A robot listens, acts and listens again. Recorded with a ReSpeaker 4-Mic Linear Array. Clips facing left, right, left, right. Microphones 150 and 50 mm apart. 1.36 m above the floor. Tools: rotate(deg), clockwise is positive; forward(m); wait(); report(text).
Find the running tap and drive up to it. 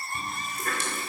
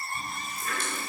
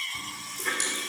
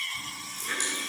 rotate(-75)
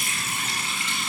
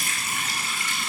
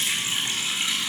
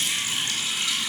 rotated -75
rotate(-25)
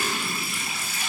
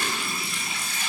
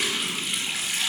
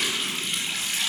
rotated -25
forward(1.0)
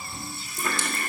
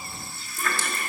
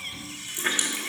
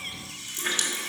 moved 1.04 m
rotate(-20)
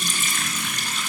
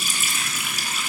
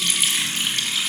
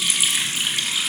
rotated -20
rotate(10)
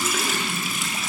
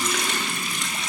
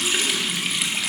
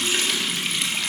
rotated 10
forward(1.0)
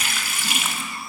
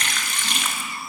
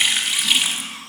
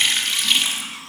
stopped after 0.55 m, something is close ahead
rotate(-10)
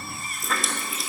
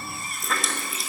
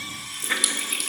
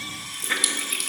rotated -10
report("I am next to the running tap.")